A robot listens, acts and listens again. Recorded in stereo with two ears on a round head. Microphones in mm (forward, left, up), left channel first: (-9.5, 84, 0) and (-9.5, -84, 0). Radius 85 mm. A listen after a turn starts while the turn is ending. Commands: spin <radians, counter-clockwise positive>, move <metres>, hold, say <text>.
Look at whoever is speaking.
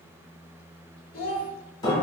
spin 0.96
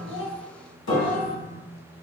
hold
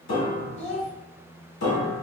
spin 1.22
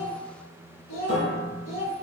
spin 0.61
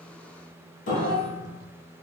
spin 0.17
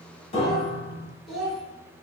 say Found it: a child speaking, straight ahead, 1 to 2 m away.